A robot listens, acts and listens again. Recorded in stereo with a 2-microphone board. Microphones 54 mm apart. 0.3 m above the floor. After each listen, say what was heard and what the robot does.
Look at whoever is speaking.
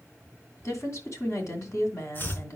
The woman speaking: about 60° left or 120° left. Turn 60° left.
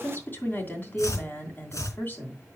So it is at 40° left. Turn 40° left.
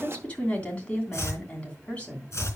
The woman speaking is now 25° left. Turn 25° left.
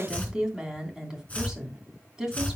The woman speaking is now 15° right. Turn 15° right.
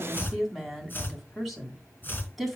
Found it: a woman speaking, straight ahead, 2 to 4 m away.